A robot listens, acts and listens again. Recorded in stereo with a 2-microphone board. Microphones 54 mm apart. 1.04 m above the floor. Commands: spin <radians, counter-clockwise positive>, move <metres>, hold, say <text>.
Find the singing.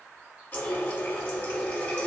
hold
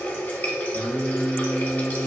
spin 0.96
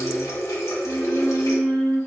spin 0.26
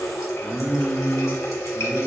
say Found it: singing, straight ahead, 1 to 2 m away.